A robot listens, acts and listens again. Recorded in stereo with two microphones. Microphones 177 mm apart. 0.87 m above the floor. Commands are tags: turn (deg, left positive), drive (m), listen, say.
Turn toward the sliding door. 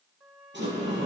<turn deg="-90"/>
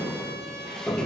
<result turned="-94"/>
<say>Found it: a sliding door, straight ahead, over 4 m away.</say>